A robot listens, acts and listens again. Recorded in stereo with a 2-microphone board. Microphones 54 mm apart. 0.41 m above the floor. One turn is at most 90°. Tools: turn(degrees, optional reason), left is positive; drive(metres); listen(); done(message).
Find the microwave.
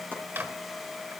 turn(degrees=-35, reason="The microwave: about 35° right or 145° right.")
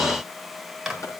done("Facing the microwave, 2 to 4 m away.")